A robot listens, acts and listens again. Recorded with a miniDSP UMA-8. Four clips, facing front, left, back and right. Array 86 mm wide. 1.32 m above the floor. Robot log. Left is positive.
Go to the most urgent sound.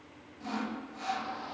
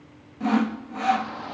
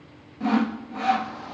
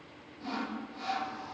note: The shout: 100° left.
cmd yaw +100
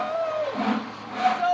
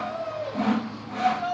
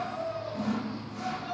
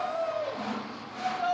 cmd fwd 1.0
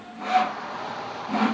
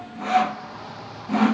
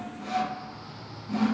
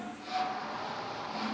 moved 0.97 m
cmd fwd 1.0
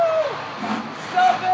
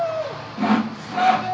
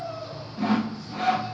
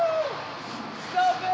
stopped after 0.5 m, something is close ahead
end: I am next to the shout.